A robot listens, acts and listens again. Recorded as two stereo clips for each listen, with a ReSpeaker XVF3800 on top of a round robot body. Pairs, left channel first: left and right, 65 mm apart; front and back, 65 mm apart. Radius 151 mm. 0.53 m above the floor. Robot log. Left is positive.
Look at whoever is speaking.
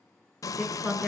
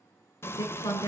note: The woman speaking: 15° right.
cmd yaw -15
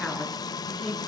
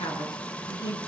end: Facing the woman speaking.